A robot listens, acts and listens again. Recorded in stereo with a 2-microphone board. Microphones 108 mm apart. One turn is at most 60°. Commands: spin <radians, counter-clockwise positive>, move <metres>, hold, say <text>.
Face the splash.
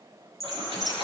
spin -1.05
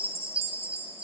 hold
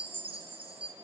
say I heard a splash, but can't make it out now. It was about straight ahead or 60° right.